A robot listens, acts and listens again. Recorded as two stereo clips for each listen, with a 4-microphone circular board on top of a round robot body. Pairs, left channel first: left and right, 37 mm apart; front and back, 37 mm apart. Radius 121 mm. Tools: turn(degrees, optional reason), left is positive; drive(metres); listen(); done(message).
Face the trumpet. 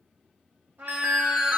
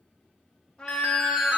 turn(degrees=-70, reason="The trumpet: 70° right.")
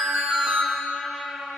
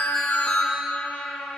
turn(degrees=-10, reason="The trumpet is now 10° right.")
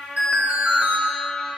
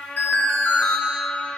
done("Facing the trumpet.")